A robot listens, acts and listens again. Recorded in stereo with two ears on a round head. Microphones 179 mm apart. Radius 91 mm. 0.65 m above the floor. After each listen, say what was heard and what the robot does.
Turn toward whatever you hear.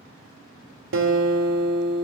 The guitar: about 65° right or 115° right. Turn 65° right.
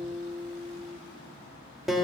Facing the guitar, 1 to 2 m away.